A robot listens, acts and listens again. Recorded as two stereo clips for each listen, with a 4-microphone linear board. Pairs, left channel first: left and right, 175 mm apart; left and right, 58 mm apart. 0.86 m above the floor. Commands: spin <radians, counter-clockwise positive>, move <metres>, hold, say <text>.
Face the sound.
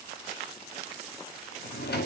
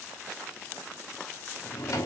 spin 1.13
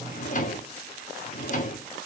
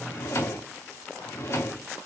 spin 0.87
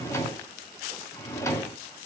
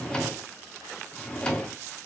spin 0.26
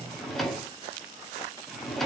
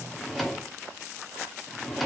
say Found it: a drawer, straight ahead, under 1 m away.